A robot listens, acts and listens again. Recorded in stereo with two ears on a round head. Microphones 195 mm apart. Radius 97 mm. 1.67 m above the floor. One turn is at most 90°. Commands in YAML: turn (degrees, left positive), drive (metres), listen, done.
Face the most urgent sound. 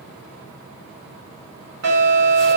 turn: -50
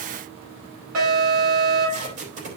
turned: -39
turn: -90
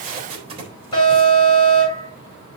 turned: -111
turn: 20
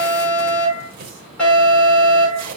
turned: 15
done: "Facing the alarm, over 4 m away."